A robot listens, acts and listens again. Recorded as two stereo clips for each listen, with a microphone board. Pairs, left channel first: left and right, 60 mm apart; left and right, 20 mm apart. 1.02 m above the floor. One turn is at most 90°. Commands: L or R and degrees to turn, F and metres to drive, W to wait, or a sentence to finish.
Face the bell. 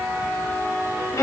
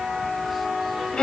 W
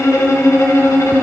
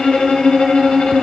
W
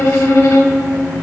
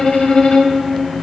I can't make out a bell, only a violin.